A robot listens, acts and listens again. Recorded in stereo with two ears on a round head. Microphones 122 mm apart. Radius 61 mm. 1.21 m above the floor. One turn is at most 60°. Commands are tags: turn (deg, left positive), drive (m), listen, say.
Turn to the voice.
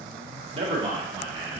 <turn deg="-35"/>
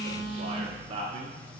<turn deg="-40"/>
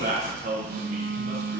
<turn deg="-60"/>
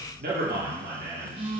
<turn deg="-60"/>
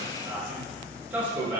<turn deg="-10"/>
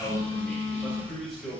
<say>Found it: a man speaking, straight ahead.</say>